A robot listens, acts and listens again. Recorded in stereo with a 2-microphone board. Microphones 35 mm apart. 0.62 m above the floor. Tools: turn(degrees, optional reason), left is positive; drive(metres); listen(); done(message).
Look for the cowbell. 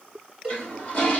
turn(degrees=-20, reason="The cowbell: about 20° right or 160° right.")
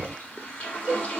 turn(degrees=-140, reason="So it is at 140° right.")
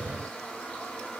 listen()
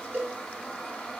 turn(degrees=-60, reason="The cowbell is now 60° right.")
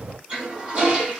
listen()
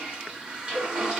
listen()
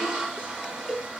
done("Facing the cowbell, under 1 m away.")